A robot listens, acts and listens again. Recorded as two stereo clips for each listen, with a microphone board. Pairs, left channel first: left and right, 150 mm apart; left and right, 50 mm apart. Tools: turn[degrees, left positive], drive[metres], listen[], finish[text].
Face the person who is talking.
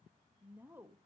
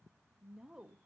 Action: turn[-30]
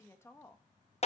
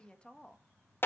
Thought: So it is at 20° left.
Action: turn[20]
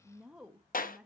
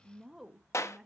Action: finish[Facing the woman speaking, 1 to 2 m away.]